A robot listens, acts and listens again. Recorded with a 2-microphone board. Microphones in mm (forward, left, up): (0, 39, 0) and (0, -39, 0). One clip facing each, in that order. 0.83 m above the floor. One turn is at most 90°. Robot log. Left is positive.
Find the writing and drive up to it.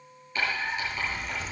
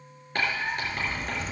note: The writing: about 65° right or 115° right.
cmd yaw -65
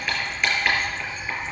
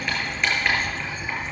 cmd fwd 1.0
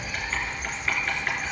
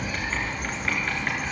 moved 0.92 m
cmd idle
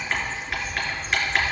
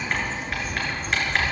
cmd fwd 1.0
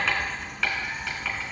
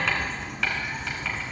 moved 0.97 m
cmd fwd 1.0
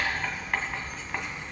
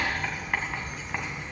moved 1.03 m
cmd fwd 1.0
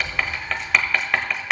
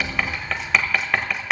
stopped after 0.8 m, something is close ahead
end: I am next to the writing.